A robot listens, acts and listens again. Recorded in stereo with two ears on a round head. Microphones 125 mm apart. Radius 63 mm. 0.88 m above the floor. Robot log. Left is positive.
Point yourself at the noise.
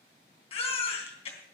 note: The baby crying: about 45° left or 135° left.
cmd yaw +45
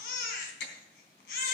note: So it is at 85° left.
cmd yaw +85
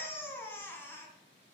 note: The baby crying is now 15° left.
cmd yaw +15
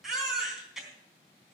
end: Found it: a baby crying, straight ahead, 2 to 4 m away.